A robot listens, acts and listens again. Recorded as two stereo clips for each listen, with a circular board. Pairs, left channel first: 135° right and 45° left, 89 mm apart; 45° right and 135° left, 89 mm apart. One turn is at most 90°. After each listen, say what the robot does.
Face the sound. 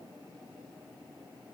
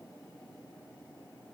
Keep listening.
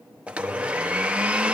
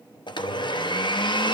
Turn 30° right.
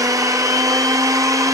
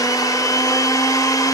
Facing the blender, under 1 m away.